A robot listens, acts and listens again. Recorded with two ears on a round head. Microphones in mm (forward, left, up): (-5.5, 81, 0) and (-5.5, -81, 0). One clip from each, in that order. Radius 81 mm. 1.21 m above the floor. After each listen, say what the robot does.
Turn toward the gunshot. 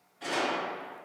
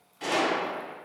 Turn 55° right.
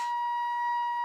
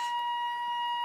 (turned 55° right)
Keep listening.
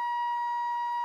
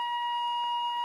I heard a gunshot, but can't make it out now. It was about straight ahead or 70° right.